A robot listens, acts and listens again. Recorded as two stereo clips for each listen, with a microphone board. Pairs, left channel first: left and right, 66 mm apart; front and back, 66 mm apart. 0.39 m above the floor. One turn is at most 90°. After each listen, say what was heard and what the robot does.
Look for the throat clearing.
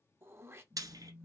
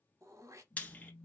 The throat clearing: 135° right. Turn 90° right.
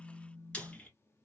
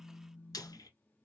Nothing new. It was at 45° right. Turn 45° right.
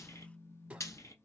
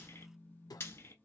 The throat clearing is now 20° right. Turn 20° right.
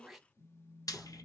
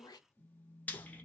Facing the throat clearing.